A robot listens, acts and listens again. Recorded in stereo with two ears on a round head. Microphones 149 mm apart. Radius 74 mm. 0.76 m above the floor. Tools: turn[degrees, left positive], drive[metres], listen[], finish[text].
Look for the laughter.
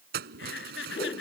Action: turn[90]
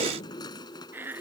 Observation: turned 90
Thought: So it is at 10° right.
Action: turn[-10]
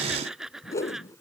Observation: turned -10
Action: finish[Found it: laughter, straight ahead.]